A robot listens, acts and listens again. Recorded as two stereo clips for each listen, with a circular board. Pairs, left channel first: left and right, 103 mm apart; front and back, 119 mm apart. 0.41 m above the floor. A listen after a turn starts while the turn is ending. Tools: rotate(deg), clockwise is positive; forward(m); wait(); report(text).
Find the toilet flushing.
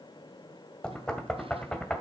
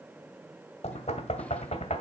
wait()
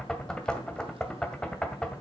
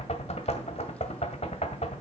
wait()
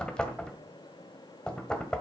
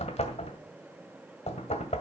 report("I can't make out a toilet flushing, only knocking.")